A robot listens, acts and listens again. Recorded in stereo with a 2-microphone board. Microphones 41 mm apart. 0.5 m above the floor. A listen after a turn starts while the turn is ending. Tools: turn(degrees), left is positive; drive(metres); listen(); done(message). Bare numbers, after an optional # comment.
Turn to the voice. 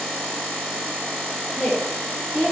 # The woman speaking: about 20° left or 160° left.
turn(20)
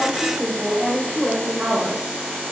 # So it is at 20° right.
turn(-20)
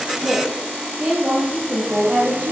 # The woman speaking is now 25° right.
turn(-25)
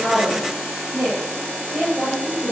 done("Facing the woman speaking, 2 to 4 m away.")